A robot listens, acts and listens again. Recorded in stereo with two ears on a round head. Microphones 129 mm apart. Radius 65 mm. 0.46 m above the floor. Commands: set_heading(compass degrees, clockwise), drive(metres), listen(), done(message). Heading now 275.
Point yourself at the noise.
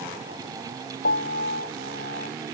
set_heading(200)
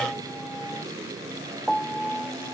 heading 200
done("Facing the piano.")